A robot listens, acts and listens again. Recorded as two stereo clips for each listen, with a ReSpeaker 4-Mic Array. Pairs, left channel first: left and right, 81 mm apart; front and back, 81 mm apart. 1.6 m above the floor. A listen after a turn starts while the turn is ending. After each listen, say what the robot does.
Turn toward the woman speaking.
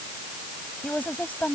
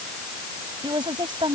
Turn 160° left.
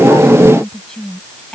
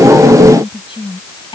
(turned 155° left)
Turn 10° left.
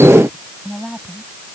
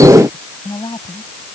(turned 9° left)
Facing the woman speaking.